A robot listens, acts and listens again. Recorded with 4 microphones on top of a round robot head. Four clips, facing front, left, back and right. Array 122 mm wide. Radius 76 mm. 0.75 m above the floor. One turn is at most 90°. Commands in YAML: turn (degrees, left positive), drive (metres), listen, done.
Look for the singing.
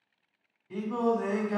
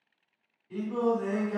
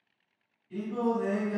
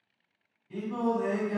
done: "Facing the singing."